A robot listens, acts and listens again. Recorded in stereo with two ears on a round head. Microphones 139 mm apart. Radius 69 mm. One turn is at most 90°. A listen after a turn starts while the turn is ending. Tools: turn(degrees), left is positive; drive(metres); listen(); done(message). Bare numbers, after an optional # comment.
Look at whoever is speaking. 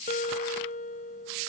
listen()
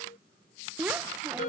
turn(-30)
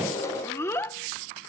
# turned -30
# So it is at 20° left.
turn(20)
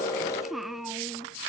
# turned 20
done("Found it: a child speaking, straight ahead.")